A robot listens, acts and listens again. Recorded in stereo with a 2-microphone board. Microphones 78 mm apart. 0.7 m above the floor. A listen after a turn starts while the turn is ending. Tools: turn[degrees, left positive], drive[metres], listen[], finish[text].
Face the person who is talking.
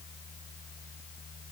Action: listen[]
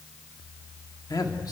Thought: The man speaking: about 55° left or 125° left.
Action: turn[55]
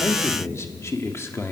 Thought: So it is at 45° left.
Action: turn[45]
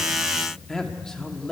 Thought: The man speaking is now 10° left.
Action: turn[10]
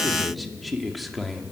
Action: finish[Facing the man speaking.]